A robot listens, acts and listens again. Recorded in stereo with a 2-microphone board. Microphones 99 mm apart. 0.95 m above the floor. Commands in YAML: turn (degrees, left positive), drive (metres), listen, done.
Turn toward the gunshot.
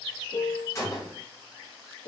turn: 30
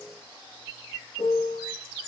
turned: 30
listen: true
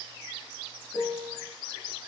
done: "I heard a gunshot, but can't make it out now. It was about straight ahead or 120° left."